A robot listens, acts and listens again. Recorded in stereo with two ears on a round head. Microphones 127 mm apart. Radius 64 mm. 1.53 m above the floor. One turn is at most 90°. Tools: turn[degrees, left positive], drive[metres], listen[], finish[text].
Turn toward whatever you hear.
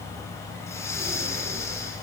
Thought: The breathing: about 20° left or 160° left.
Action: turn[20]
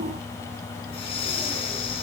Thought: So it is at 140° left.
Action: turn[90]
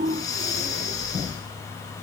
Thought: The breathing is now 25° left.
Action: turn[25]
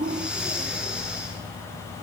Action: finish[Found it: breathing, straight ahead, over 4 m away.]